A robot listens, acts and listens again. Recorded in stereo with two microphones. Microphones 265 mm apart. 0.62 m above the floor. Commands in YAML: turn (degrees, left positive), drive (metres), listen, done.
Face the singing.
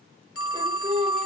turn: -25
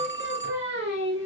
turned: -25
turn: -135
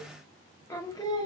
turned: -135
turn: 15
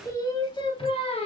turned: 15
turn: 25
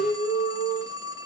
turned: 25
turn: 20
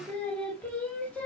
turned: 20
done: "Facing the singing, 1 to 2 m away."